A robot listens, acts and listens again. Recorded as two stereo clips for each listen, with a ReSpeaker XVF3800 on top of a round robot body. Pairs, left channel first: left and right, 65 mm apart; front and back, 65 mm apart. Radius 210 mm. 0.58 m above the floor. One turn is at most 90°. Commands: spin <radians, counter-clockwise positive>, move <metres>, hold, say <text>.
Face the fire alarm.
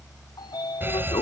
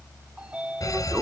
spin -0.52
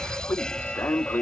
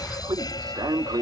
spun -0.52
spin 0.17
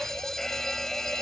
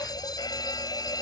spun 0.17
say Found it: a fire alarm, straight ahead.